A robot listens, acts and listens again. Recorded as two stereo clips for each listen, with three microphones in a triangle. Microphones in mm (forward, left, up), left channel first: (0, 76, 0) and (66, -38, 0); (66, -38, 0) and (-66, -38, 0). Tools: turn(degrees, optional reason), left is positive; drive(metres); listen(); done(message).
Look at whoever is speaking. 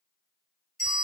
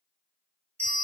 listen()
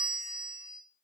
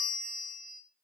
listen()
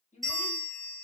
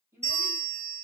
turn(degrees=120, reason="The child speaking: 120° left.")
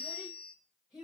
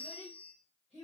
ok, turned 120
turn(degrees=25, reason="The child speaking is now 25° left.")
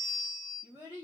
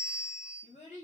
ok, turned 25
done("Facing the child speaking, 1 to 2 m away.")